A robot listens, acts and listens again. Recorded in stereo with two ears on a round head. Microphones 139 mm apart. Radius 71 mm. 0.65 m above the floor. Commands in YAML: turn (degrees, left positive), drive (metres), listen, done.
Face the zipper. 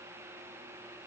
listen: true
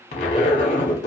turn: 45
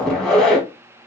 done: "Found it: a zipper, straight ahead."